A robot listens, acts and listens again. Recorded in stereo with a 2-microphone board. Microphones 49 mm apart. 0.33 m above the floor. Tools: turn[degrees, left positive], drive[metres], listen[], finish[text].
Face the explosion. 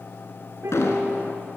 Action: turn[90]
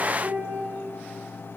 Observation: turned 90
Action: finish[I heard an explosion from this way, but can't make it out now.]